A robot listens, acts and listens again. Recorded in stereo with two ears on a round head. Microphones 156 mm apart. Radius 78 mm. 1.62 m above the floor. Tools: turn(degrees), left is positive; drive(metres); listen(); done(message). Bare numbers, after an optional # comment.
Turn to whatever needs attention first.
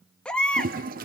turn(30)
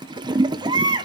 # So it is at 25° right.
turn(-25)
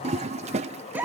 # The baby crying is now 10° right.
turn(-10)
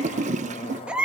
done("Facing the baby crying.")